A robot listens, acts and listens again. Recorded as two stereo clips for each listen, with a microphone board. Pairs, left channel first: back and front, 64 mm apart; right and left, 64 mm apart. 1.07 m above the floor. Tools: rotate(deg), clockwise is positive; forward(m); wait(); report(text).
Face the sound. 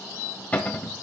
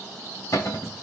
rotate(115)
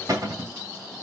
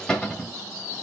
rotate(10)
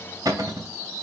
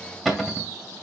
report("Found it: a cupboard door, straight ahead, 2 to 4 m away.")